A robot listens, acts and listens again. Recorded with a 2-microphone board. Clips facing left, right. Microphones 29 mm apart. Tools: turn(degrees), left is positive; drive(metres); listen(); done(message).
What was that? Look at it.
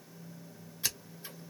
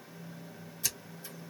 turn(degrees=35)
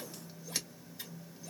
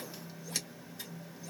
turn(degrees=10)
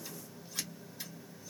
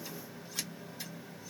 done("Facing the scissors.")